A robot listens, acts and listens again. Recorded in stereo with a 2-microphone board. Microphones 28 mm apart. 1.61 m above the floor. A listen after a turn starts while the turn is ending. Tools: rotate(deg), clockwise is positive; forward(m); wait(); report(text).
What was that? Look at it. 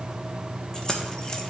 rotate(-25)
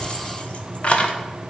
rotate(-130)
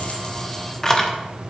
rotate(-20)
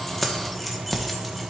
report("Facing the keys jangling.")